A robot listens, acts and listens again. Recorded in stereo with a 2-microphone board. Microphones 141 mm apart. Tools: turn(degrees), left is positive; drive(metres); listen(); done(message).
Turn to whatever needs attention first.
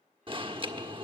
turn(degrees=-40)
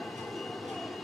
done("Facing the alarm, 1 to 2 m away.")